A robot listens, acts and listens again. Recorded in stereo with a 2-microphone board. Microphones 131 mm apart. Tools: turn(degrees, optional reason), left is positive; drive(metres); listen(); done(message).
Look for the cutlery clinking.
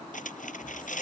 turn(degrees=90)
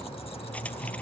listen()
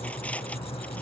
listen()
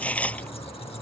turn(degrees=10, reason="The cutlery clinking is now 10° left.")
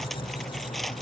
listen()
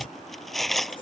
done("Facing the cutlery clinking.")